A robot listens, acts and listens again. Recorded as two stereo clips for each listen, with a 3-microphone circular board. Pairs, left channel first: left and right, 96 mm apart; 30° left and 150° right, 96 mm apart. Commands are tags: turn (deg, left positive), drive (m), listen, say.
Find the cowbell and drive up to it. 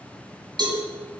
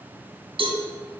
<turn deg="-130"/>
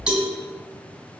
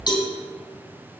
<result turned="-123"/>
<drive m="1.0"/>
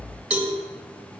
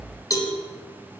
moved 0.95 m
<turn deg="-10"/>
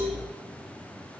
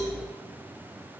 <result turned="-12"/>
<listen/>
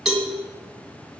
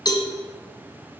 <drive m="1.0"/>
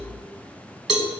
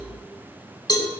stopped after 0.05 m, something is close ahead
<say>I am next to the cowbell.</say>